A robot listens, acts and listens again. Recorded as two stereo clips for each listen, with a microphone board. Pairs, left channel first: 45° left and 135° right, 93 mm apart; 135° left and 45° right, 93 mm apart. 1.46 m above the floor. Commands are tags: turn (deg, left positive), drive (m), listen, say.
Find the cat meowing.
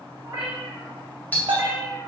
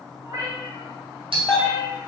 <turn deg="-80"/>
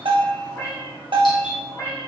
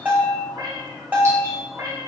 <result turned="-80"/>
<say>Found it: a cat meowing, straight ahead, 1 to 2 m away.</say>